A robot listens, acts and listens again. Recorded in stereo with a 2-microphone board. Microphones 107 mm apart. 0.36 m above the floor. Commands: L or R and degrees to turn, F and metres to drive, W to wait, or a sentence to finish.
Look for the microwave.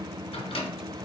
L60
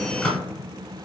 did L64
L10
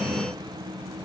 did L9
W
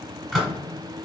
Facing the microwave, 1 to 2 m away.